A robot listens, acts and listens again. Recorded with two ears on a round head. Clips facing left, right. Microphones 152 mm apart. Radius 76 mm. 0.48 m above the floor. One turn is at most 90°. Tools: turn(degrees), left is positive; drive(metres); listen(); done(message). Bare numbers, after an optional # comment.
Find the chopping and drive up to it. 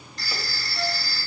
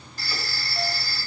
listen()
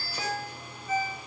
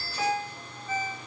listen()
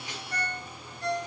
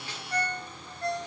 done("I can't make out chopping to turn to.")